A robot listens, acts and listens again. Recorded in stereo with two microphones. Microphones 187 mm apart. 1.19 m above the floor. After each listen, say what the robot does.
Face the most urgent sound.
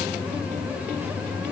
Keep listening.
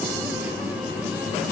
Keep listening.
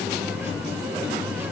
I can't make out anything urgent.